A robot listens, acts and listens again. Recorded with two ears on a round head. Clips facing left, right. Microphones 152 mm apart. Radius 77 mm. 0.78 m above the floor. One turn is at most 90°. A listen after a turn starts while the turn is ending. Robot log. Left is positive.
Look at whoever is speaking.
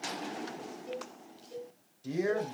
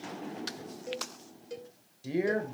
cmd yaw -30
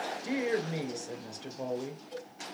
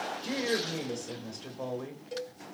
note: So it is at 10° left.
cmd yaw +10
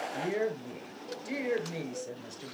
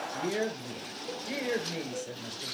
end: Found it: a woman speaking, straight ahead, 2 to 4 m away.